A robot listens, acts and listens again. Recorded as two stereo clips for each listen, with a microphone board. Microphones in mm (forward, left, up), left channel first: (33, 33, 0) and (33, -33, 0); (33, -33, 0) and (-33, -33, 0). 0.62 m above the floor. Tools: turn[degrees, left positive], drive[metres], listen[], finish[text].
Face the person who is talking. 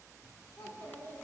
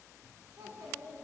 Thought: The child speaking: 150° left.
Action: turn[150]
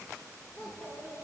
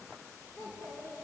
Thought: The child speaking is now 35° left.
Action: turn[35]
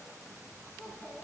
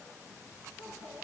Action: finish[Found it: a child speaking, straight ahead, over 4 m away.]